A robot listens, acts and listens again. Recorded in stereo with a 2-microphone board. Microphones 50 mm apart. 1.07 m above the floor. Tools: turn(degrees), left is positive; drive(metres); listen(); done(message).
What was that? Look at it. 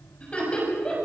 turn(degrees=20)
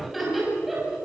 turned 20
done("Found it: laughter, straight ahead.")